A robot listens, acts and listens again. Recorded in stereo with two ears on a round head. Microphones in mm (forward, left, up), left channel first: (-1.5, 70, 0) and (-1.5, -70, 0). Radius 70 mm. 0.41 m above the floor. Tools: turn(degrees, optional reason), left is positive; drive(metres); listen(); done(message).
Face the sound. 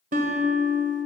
turn(degrees=-55, reason="The guitar: about 55° right or 125° right.")
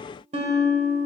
turn(degrees=-55, reason="So it is at 55° right.")
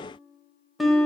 done("Found it: a guitar, straight ahead, 1 to 2 m away.")